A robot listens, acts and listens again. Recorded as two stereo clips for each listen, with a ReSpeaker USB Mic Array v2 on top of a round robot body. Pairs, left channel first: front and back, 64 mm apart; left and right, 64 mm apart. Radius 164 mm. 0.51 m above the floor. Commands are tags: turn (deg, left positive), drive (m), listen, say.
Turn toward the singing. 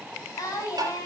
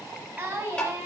<turn deg="-30"/>
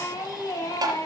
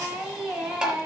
<turn deg="-15"/>
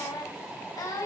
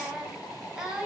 <turn deg="-15"/>
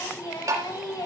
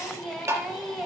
<say>Facing the singing.</say>